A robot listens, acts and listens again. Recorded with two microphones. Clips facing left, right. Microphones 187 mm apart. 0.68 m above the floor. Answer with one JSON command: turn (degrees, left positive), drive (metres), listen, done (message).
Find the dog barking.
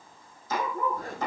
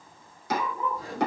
{"turn": 55}
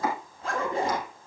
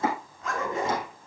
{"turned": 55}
{"done": "Facing the dog barking, 2 to 4 m away."}